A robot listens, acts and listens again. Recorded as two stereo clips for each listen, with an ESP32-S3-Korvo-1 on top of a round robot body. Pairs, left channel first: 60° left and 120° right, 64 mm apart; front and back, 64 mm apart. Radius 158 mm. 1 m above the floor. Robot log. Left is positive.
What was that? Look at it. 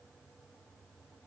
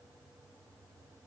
cmd idle
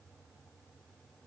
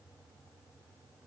cmd idle
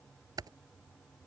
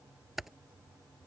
note: The typing on a keyboard: 95° right.
cmd yaw -95
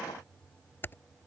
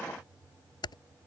end: Found it: typing on a keyboard, straight ahead.